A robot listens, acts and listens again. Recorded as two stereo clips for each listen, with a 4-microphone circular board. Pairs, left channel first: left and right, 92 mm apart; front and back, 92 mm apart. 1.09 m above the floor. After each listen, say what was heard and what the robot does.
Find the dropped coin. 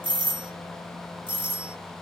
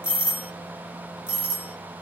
Keep listening.
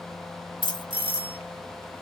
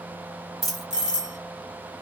The dropped coin: 95° left. Turn 95° left.
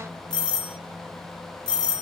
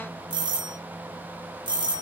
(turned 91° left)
Facing where the dropped coin came from. I can't hear it now.